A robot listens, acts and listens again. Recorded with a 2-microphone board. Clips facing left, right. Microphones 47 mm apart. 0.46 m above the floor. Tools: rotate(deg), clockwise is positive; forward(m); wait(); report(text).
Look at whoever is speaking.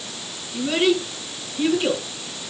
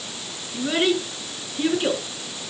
rotate(20)
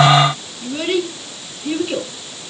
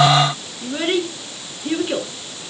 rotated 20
rotate(140)
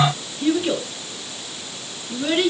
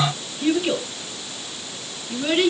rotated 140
report("Facing the child speaking, over 4 m away.")